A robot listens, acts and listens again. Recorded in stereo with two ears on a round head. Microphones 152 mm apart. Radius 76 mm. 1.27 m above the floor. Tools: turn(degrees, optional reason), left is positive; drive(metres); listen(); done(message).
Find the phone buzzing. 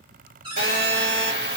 turn(degrees=-60, reason="The phone buzzing: about 60° right or 120° right.")
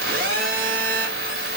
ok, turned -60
turn(degrees=-55, reason="So it is at 55° right.")
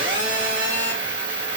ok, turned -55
turn(degrees=-30, reason="The phone buzzing is now 30° right.")
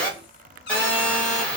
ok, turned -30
done("Found it: a phone buzzing, straight ahead.")